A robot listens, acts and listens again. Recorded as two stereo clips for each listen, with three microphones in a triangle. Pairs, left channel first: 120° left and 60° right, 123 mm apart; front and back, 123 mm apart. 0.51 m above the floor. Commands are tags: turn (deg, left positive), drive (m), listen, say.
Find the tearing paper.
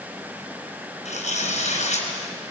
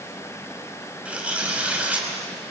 <turn deg="100"/>
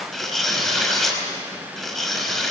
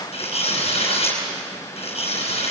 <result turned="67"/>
<turn deg="35"/>
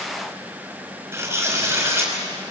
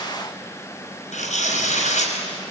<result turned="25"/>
<turn deg="10"/>
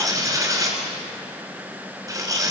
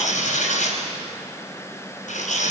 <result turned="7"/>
<say>Found it: tearing paper, straight ahead, over 4 m away.</say>